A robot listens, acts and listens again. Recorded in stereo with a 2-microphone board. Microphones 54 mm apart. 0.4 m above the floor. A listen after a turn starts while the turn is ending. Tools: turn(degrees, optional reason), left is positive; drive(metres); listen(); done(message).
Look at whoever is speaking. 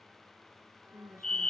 turn(degrees=-65, reason="The woman speaking: about 65° right or 115° right.")
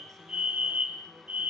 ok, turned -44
listen()
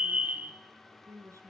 turn(degrees=-70, reason="So it is at 70° right.")
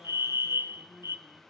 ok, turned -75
turn(degrees=10, reason="The woman speaking is now 10° left.")
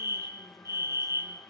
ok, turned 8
listen()
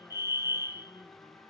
listen()
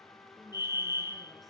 done("I heard a woman speaking from this way, but can't make it out now.")